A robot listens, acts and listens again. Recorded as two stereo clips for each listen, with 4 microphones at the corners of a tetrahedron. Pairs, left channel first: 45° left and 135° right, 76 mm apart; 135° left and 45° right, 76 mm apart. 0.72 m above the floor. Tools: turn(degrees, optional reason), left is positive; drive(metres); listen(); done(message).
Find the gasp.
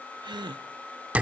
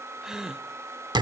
turn(degrees=-130, reason="The gasp: 130° right.")
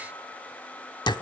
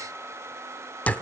done("Facing where the gasp came from. I can't hear it now.")